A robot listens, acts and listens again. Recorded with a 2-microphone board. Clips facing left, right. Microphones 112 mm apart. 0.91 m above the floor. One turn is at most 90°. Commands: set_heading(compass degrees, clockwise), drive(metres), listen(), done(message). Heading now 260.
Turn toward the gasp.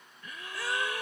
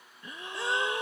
set_heading(285)
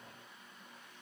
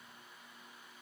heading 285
listen()
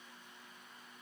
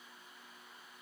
done("I heard a gasp, but can't make it out now. It was about straight ahead or 130° right.")